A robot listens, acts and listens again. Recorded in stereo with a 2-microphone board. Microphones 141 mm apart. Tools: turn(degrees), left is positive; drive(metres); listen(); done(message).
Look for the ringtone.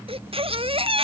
listen()
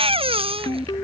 turn(degrees=30)
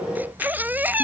listen()
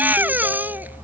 listen()
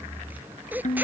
turn(degrees=120)
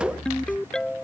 done("Facing the ringtone.")